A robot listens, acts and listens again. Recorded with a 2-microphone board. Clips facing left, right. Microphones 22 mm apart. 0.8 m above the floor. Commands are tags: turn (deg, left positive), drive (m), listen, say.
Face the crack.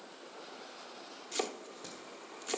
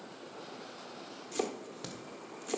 <turn deg="-75"/>
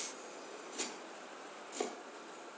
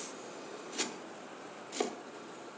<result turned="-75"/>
<listen/>
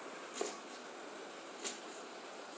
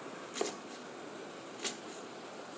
<say>I heard a crack, but can't make it out now. It was about straight ahead or 30° right.</say>